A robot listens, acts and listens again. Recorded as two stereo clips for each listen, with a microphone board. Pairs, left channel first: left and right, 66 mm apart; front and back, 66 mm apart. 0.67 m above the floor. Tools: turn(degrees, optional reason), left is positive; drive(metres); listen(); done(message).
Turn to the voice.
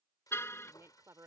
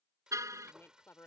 turn(degrees=-50, reason="The woman speaking: 50° right.")
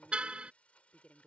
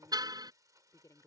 turn(degrees=25, reason="The woman speaking is now 25° left.")
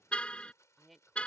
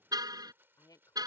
done("Facing the woman speaking.")